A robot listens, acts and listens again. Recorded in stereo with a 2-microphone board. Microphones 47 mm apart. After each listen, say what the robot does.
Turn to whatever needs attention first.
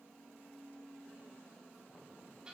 Keep listening.
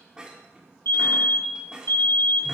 Turn 65° left.
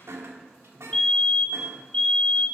Turn 25° left.
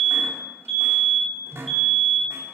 Facing the fire alarm, 2 to 4 m away.